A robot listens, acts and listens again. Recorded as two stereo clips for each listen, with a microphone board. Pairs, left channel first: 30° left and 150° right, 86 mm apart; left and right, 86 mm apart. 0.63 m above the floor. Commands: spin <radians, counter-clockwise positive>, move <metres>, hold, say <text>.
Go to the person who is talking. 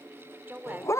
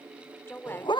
spin 2.62
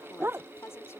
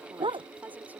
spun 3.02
spin -0.44
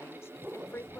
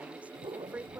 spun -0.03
spin -0.35
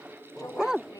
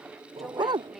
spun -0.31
hold
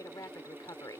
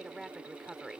move 1.0
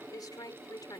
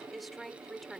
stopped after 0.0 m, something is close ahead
say Blocked. The woman speaking is further on, straight ahead.